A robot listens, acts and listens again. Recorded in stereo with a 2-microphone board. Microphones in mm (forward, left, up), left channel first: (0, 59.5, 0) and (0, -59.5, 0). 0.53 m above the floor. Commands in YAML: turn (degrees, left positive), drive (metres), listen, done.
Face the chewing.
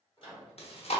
turn: 55
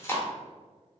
turn: 25
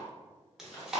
done: "Facing the chewing."